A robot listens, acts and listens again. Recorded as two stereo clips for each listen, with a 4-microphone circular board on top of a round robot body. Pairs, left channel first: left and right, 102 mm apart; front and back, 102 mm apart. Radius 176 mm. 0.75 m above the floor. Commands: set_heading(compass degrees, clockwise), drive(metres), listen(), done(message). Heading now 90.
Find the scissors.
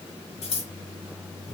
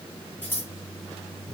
set_heading(15)
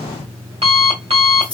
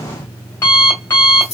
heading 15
listen()
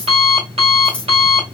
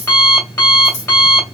set_heading(5)
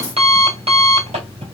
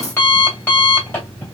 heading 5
listen()
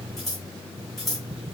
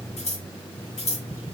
done("Facing the scissors, 1 to 2 m away.")